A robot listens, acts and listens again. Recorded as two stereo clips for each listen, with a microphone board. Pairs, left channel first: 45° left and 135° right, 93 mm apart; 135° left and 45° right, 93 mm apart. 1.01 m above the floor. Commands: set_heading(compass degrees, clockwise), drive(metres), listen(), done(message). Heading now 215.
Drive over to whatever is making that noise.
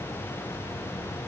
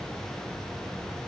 listen()
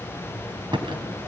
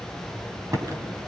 set_heading(315)
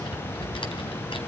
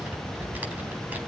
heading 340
set_heading(315)
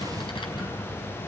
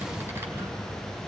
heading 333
set_heading(313)
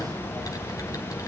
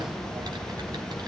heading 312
listen()
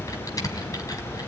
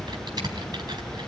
drive(1.0)
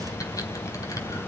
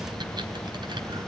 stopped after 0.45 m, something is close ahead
listen()
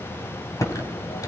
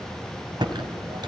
done("Blocked. The typing on a keyboard is further on, straight ahead.")